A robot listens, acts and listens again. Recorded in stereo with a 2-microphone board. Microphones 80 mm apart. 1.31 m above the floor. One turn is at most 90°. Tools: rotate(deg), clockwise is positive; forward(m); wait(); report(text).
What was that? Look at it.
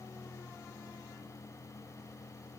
wait()
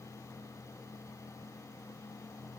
wait()
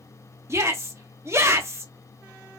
rotate(35)
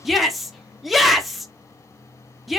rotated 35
report("Found it: a shout, straight ahead.")